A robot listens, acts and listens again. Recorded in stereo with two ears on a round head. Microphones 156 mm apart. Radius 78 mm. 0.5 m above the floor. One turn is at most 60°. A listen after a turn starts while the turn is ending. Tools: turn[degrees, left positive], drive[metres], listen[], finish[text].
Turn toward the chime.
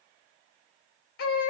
Action: listen[]
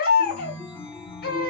Action: turn[30]
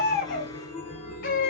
Thought: So it is at 145° left.
Action: turn[60]
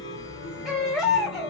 Thought: The chime is now 75° left.
Action: turn[60]
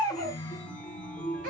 Action: finish[Facing the chime.]